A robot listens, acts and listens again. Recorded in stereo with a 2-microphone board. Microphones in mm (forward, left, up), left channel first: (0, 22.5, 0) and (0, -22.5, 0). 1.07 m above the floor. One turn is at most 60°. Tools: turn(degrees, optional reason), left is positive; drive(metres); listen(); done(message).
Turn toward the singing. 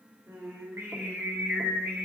turn(degrees=-60)
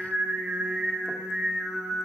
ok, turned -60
turn(degrees=-10, reason="So it is at 10° right.")
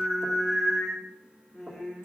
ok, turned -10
turn(degrees=15, reason="The singing is now 15° left.")
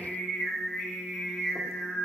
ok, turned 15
turn(degrees=10, reason="The singing is now 10° left.")
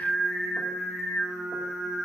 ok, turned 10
done("Facing the singing.")